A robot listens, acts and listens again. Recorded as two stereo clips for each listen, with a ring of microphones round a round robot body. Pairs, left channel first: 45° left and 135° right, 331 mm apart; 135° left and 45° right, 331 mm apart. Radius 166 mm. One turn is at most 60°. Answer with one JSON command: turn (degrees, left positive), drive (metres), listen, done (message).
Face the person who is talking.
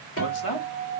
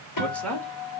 {"turn": 50}
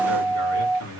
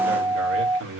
{"done": "Facing the man speaking, 2 to 4 m away."}